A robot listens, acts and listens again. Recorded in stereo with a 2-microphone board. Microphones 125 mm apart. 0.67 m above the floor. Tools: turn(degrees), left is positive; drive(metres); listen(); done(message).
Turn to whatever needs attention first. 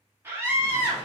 turn(degrees=-20)
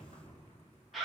done("Found it: a scream, straight ahead, 1 to 2 m away.")